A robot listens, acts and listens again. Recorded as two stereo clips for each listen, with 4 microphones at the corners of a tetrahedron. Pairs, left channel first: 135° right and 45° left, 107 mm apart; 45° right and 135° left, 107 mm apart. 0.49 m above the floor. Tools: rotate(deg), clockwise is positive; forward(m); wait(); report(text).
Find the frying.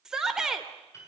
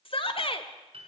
wait()
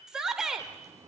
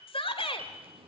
rotate(-105)
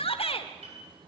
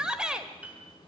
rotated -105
report("Facing the frying.")